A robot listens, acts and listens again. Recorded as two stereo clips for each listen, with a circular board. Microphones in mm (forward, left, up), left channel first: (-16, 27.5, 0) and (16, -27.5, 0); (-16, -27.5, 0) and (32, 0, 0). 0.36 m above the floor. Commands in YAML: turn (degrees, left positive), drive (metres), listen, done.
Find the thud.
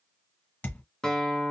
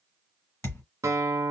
turn: 180
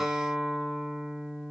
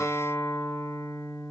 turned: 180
done: "Facing where the thud came from. I can't hear it now."